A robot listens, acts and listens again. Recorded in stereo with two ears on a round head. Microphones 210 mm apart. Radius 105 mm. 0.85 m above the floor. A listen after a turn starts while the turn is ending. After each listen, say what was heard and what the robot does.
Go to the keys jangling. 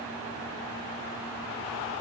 Keep listening.
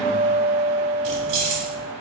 Turn 90° right.
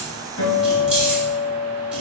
Keep listening.
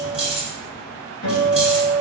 Drive 1.0 m forward.
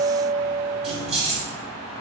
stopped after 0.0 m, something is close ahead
Something is in my way. I am facing the keys jangling but have not reached it.